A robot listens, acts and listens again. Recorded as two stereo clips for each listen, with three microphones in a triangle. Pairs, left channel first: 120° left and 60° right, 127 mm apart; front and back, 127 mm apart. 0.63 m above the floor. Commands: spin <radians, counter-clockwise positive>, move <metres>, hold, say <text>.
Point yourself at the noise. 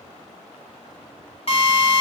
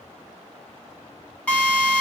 spin 1.40
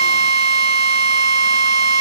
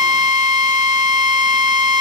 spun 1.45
say Found it: a drill, straight ahead.